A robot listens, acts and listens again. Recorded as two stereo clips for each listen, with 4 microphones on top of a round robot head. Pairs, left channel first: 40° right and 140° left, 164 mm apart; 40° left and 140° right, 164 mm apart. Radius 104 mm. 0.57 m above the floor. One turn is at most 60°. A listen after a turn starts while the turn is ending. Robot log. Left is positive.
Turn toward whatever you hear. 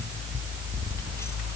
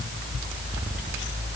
cmd idle
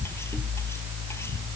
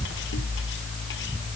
cmd idle
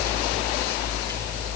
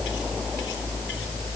end: I can't make out anything to turn to.